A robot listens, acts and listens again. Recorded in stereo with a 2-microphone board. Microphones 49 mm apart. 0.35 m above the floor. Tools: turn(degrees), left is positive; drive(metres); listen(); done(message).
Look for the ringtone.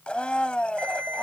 turn(degrees=-50)
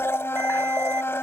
listen()
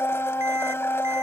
listen()
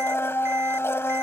done("I heard a ringtone, but can't make it out now. It was about straight ahead or 80° right.")